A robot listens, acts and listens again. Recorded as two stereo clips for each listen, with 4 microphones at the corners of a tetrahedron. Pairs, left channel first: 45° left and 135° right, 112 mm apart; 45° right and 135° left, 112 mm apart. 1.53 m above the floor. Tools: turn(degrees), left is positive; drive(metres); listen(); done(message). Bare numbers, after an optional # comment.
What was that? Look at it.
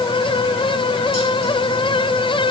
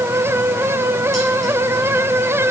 listen()
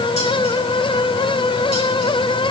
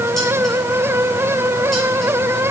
listen()
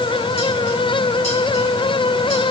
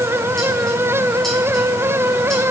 done("I can't make out anything.")